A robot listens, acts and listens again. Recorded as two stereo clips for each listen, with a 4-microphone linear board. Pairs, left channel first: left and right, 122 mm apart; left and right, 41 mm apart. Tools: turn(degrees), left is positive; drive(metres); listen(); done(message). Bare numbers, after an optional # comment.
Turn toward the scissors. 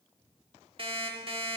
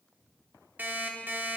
listen()
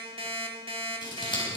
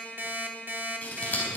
# The scissors: about 40° left or 140° left.
turn(40)
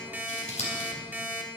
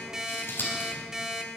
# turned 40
# So it is at 100° left.
turn(100)
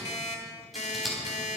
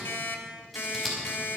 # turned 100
done("Facing the scissors, over 4 m away.")